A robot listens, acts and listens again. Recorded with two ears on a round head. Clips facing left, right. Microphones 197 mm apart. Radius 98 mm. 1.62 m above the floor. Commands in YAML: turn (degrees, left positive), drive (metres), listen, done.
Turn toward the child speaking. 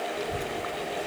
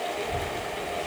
turn: 30
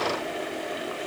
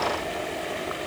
listen: true
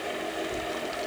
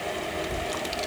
turn: -70
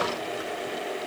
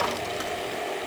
listen: true
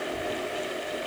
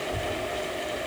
turn: -55
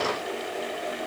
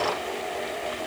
listen: true
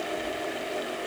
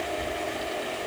turn: -20
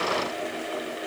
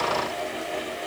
listen: true
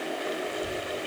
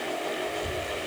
done: "Found it: a child speaking, straight ahead."